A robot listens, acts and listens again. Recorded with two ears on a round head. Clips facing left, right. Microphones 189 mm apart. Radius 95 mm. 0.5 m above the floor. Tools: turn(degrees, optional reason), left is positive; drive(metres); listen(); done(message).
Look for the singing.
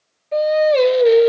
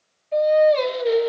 turn(degrees=60, reason="The singing: about 60° left or 120° left.")
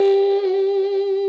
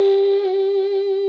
done("Facing the singing, 1 to 2 m away.")